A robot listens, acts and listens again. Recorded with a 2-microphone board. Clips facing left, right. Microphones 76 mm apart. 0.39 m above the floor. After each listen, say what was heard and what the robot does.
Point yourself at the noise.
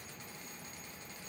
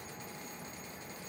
Keep listening.
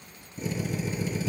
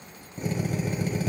The drill: about 60° right or 120° right. Turn 60° right.
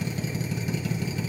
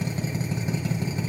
So it is at 40° right. Turn 40° right.
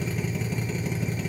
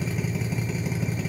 Found it: a drill, straight ahead, 2 to 4 m away.